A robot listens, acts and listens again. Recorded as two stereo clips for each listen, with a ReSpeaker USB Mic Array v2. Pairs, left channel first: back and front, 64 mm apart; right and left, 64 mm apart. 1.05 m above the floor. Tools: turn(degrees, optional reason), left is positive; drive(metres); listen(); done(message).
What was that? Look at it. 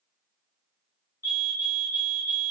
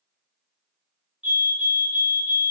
turn(degrees=25, reason="The fire alarm: 25° left.")
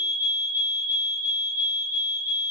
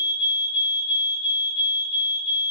done("Found it: a fire alarm, straight ahead, 2 to 4 m away.")